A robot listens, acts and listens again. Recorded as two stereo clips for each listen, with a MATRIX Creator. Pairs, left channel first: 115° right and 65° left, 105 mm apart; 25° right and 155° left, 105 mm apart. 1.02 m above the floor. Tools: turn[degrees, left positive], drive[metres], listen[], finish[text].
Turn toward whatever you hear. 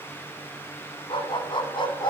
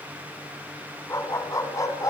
Thought: The dog barking: 75° right.
Action: turn[-75]
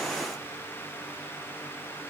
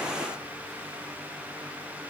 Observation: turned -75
Action: listen[]
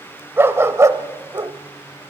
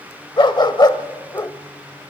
Thought: The dog barking is now 25° left.
Action: turn[25]
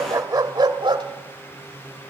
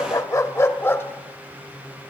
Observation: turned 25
Thought: The dog barking is now 40° left.
Action: turn[40]
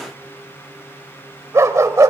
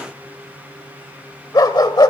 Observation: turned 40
Thought: The dog barking is now 15° left.
Action: turn[15]
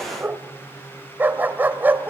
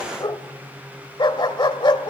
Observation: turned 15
Action: finish[Found it: a dog barking, straight ahead, 1 to 2 m away.]